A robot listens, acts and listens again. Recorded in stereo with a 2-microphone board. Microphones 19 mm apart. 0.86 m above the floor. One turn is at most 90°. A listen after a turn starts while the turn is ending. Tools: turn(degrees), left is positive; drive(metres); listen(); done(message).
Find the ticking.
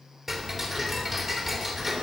turn(degrees=-25)
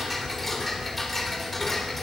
done("Found it: ticking, straight ahead, 2 to 4 m away.")